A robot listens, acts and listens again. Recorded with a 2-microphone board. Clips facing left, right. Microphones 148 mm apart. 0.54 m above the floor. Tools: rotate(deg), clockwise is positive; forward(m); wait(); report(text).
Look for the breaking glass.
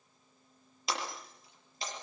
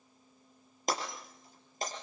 rotate(45)
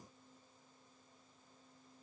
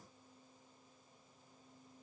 wait()
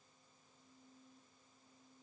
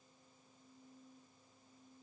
report("I heard breaking glass, but can't make it out now. It was about straight ahead or 90° right.")